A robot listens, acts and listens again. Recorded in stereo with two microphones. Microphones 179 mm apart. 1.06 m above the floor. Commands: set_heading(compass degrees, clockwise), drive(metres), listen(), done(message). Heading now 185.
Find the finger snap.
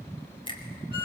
set_heading(160)
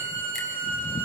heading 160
listen()
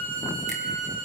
listen()
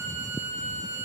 done("I heard a finger snap, but can't make it out now. It was about straight ahead or 130° left.")